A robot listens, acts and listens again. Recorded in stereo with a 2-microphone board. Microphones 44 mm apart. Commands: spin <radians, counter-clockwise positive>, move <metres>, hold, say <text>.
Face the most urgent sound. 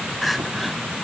spin 0.52
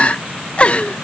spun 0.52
spin 2.62
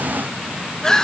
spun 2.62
spin 0.26
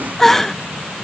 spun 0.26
spin 0.17
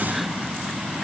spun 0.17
hold
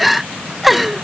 say Facing the crying.